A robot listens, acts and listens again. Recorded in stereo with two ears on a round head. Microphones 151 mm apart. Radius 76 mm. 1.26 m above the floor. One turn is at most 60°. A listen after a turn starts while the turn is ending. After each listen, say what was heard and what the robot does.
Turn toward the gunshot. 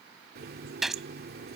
Turn 30° left.
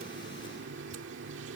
Keep listening.
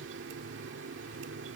I heard a gunshot, but can't make it out now. It was about 30° right or 150° left.